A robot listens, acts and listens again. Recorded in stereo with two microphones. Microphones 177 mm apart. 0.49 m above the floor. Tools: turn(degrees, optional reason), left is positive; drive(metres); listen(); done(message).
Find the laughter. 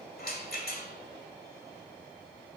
listen()
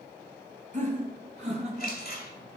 turn(degrees=-35, reason="The laughter: about 35° right or 145° right.")
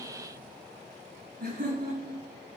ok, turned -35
turn(degrees=-120, reason="So it is at 120° right.")
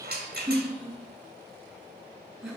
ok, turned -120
done("Facing the laughter, over 4 m away.")